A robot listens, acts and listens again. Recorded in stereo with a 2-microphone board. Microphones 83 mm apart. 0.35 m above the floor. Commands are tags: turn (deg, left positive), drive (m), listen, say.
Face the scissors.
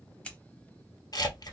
<turn deg="30"/>
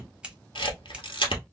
<turn deg="-15"/>
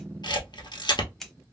<say>Facing the scissors, under 1 m away.</say>